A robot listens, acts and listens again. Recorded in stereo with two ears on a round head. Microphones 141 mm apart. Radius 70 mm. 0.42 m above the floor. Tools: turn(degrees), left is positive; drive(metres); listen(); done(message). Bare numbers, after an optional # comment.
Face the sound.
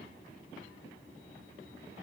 listen()
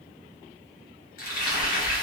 # The frying: about 55° left or 125° left.
turn(55)
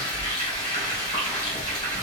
# So it is at 30° left.
turn(30)
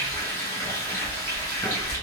# The frying is now 20° left.
turn(20)
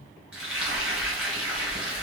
done("Facing the frying.")